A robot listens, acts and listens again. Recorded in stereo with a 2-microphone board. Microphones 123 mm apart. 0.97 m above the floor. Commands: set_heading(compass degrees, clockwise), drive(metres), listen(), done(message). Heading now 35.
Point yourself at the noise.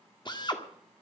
set_heading(0)
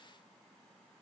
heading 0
listen()
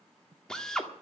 done("Facing the drill.")